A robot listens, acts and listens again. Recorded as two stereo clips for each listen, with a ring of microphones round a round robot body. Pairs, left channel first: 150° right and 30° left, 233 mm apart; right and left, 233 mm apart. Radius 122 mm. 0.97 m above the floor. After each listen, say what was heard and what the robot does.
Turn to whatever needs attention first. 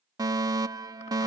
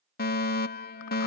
The fire alarm: 45° right. Turn 45° right.
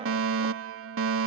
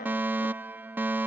The fire alarm is now 10° left. Turn 10° left.
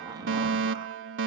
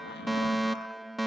Facing the fire alarm.